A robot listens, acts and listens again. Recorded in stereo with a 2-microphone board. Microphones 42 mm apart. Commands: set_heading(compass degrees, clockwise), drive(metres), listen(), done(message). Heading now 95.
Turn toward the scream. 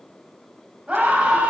set_heading(125)
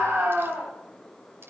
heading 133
set_heading(243)
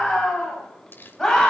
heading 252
set_heading(242)
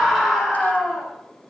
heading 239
done("Facing the scream, over 4 m away.")